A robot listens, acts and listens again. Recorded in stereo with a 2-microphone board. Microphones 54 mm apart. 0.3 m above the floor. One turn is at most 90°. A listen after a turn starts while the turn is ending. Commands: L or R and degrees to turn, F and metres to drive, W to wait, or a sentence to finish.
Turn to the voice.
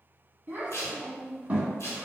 R30
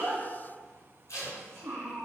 R90
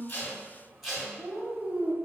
R30
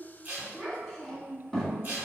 Found it: a child speaking, straight ahead.